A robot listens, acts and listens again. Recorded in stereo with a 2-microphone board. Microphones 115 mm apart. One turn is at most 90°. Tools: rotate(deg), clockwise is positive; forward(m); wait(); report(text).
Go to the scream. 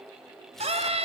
rotate(65)
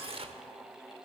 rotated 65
wait()
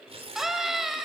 forward(1.0)
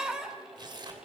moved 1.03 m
forward(1.0)
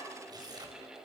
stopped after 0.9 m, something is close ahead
wait()
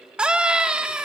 rotate(10)
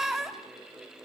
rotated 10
report("Arrived at the scream, straight ahead.")